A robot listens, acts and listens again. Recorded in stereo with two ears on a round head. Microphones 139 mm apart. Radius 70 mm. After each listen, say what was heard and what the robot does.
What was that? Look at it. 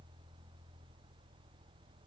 Keep listening.
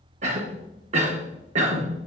The cough: about 50° right or 130° right. Turn 50° right.
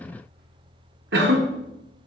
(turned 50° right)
So it is at 85° right. Turn 85° right.
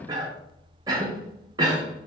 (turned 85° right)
The cough is now 25° right. Turn 25° right.
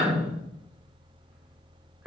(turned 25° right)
Found it: a cough, straight ahead, under 1 m away.